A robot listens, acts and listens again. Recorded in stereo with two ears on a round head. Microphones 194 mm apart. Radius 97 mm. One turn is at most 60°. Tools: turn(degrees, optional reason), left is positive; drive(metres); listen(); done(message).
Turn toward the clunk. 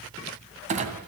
turn(degrees=-35, reason="The clunk: about 35° right or 145° right.")
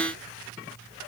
listen()
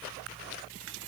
done("I heard a clunk, but can't make it out now. It was about straight ahead or 110° right.")